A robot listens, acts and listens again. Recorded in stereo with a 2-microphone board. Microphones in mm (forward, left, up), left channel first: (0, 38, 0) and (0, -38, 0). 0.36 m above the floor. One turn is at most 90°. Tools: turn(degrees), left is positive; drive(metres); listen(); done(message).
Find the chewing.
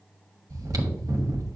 turn(degrees=-50)
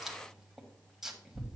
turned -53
done("Facing the chewing.")